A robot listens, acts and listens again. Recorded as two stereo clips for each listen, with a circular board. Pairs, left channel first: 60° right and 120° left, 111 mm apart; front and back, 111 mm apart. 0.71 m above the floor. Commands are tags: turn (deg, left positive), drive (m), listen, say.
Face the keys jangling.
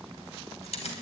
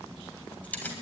<turn deg="-75"/>
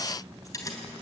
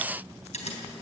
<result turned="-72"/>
<say>Facing the keys jangling.</say>